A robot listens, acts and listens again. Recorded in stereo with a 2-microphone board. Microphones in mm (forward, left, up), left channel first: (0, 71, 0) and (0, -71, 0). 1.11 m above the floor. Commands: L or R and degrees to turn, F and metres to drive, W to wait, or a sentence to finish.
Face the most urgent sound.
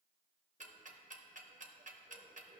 W
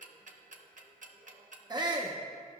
R30
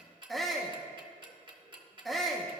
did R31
Facing the shout.